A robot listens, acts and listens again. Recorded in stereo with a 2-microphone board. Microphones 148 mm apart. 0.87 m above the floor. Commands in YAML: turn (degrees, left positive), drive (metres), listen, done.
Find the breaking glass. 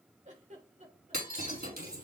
turn: -90
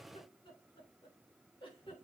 done: "Facing where the breaking glass came from. I can't hear it now."